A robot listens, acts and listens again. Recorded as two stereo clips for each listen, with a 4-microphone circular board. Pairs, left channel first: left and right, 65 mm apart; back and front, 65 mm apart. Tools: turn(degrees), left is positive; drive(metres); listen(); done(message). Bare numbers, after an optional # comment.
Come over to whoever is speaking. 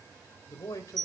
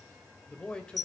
# The man speaking: 105° left.
turn(105)
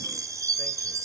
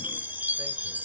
listen()
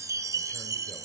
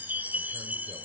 listen()
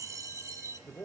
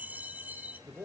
# The man speaking is now 40° left.
turn(40)
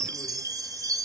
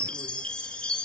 listen()
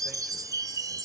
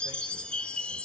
listen()
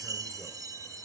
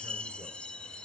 done("Facing where the man speaking came from. I can't hear it now. I did not reach it.")